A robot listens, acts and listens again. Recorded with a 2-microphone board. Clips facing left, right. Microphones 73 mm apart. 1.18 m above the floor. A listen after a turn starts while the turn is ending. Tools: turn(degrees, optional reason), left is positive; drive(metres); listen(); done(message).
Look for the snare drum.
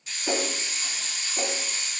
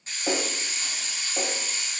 turn(degrees=-65, reason="The snare drum: about 65° right or 115° right.")
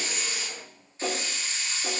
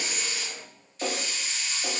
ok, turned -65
turn(degrees=-35, reason="So it is at 35° right.")
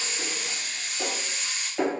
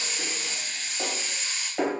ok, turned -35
turn(degrees=-10, reason="The snare drum is now 10° right.")
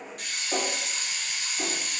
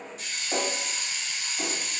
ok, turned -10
done("Found it: a snare drum, straight ahead, 1 to 2 m away.")